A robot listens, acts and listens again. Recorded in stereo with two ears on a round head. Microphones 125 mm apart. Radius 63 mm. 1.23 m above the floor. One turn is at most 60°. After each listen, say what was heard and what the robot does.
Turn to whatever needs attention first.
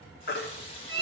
Turn 60° left.
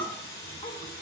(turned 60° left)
Nothing new. It was at 30° left. Turn 30° left.
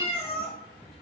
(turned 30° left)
Keep listening.
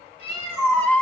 The baby crying is now 10° left. Turn 10° left.
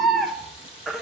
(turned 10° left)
Found it: a baby crying, straight ahead.